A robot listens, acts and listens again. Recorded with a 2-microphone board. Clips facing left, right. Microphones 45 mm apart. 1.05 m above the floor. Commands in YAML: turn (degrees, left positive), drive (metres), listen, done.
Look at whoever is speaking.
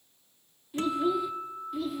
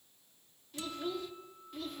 turn: 30
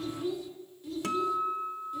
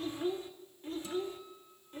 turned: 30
turn: -40
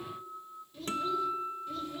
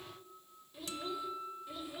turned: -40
turn: -15
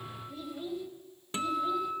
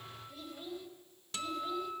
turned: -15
done: "Found it: a child speaking, straight ahead."